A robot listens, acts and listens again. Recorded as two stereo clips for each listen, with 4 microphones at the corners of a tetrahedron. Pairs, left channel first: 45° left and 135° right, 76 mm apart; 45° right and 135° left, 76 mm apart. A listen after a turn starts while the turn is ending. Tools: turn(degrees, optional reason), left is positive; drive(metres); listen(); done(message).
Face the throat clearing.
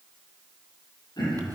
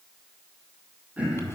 turn(degrees=60, reason="The throat clearing: 60° left.")
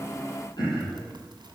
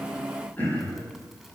turn(degrees=25, reason="The throat clearing is now 25° left.")
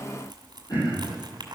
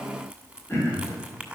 turn(degrees=10, reason="The throat clearing is now 10° left.")
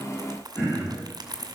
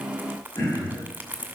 done("Facing the throat clearing, over 4 m away.")